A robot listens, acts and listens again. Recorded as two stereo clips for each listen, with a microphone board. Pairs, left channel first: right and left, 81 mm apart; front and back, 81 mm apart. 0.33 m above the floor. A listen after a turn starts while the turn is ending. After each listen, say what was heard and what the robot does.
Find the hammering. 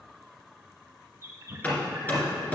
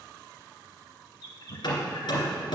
The hammering: 20° right. Turn 20° right.
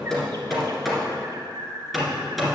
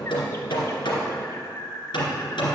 Facing the hammering, 2 to 4 m away.